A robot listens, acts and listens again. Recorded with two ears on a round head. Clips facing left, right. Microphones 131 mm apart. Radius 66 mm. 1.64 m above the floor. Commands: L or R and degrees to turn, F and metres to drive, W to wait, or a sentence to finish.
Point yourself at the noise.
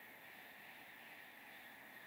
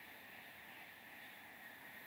W
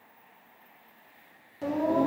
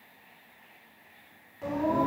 L40
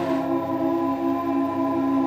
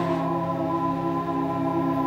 L120
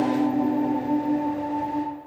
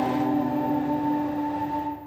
L25
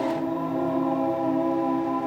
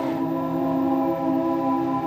R10
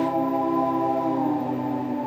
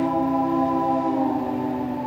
Facing the singing, 2 to 4 m away.